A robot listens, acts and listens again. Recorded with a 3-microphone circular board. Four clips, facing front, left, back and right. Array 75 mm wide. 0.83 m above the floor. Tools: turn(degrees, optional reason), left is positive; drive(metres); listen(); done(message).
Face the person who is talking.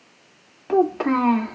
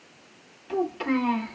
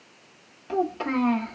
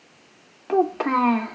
turn(degrees=-55, reason="The child speaking: 55° right.")
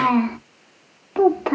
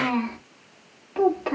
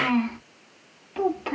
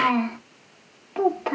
done("Facing the child speaking.")